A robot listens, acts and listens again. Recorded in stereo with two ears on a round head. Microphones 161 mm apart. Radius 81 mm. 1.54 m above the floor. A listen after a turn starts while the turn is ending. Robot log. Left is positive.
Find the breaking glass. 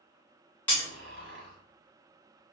cmd yaw +30
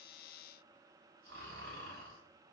cmd idle
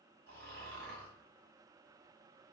end: I heard breaking glass, but can't make it out now. It was about 20° right or 140° left.